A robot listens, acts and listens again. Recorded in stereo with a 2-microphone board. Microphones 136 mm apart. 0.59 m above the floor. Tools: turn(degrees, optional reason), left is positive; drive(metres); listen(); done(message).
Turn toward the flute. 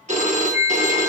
turn(degrees=50, reason="The flute: about 50° left or 130° left.")
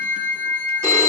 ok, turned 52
done("Found it: a flute, straight ahead.")